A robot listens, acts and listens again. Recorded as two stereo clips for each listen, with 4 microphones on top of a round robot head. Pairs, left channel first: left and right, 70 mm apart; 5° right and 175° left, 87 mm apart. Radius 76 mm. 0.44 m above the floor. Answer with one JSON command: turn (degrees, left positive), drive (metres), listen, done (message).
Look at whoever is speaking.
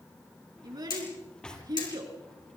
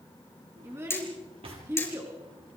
{"turn": -115}
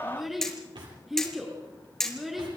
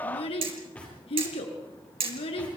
{"done": "Found it: a child speaking, straight ahead."}